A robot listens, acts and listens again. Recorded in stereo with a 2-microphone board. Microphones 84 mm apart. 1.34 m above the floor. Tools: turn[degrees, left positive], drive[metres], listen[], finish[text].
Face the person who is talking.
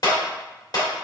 Action: listen[]
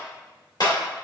Action: listen[]
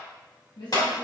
Action: turn[90]
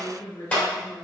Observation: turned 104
Thought: So it is at 35° left.
Action: turn[35]
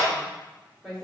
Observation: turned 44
Action: finish[Facing the woman speaking.]